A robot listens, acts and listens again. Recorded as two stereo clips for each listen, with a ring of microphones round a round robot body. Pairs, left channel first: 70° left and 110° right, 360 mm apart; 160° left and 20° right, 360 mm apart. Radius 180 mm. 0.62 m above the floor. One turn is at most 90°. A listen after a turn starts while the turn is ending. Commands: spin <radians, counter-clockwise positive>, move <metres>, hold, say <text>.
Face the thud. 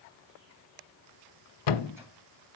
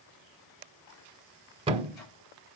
spin 0.96
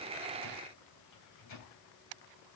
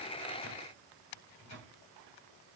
say I heard a thud from this way, but can't make it out now.